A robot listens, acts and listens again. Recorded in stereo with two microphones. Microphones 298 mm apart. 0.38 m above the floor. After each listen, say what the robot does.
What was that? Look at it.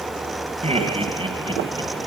Turn 15° right.
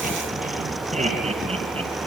Turn 20° right.
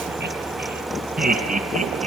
Turn 20° right.
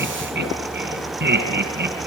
Turn 35° right.
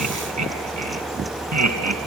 Turn 120° right.
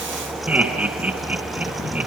Facing the laughter.